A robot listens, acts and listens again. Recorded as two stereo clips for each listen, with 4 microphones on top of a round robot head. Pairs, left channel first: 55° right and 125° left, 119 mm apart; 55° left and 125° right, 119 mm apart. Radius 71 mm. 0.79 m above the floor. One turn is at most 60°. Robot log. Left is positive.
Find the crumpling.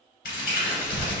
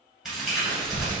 note: The crumpling: 40° right.
cmd yaw -40
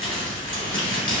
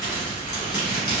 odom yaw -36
end: Found it: crumpling, straight ahead, 1 to 2 m away.